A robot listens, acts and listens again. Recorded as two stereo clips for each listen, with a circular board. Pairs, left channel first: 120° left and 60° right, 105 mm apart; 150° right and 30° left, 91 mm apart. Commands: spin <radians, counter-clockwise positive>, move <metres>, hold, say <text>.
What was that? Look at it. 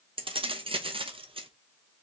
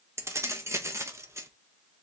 spin -0.52
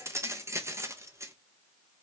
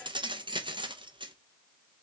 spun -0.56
say Facing the keys jangling, under 1 m away.